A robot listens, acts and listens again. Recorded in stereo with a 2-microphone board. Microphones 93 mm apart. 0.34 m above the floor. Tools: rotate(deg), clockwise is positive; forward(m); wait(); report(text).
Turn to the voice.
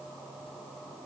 wait()
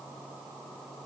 wait()
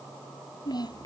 rotate(-45)
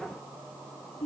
rotate(-90)
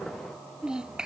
rotate(10)
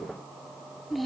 report("Found it: a child speaking, straight ahead.")